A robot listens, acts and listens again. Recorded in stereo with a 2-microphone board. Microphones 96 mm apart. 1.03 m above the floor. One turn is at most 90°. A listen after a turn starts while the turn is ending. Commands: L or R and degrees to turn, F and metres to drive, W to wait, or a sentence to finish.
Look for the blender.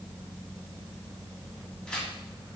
W
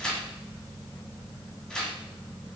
W
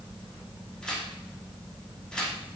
I can't make out a blender to turn to.